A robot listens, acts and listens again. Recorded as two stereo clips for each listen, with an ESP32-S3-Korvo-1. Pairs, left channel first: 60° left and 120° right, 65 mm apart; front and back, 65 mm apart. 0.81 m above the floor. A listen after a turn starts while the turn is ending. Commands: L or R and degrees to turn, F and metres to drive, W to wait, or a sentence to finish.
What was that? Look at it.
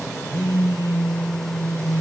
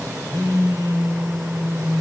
R155
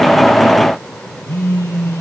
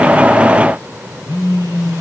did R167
L10
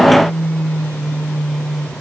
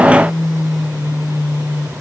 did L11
Found it: a phone buzzing, straight ahead.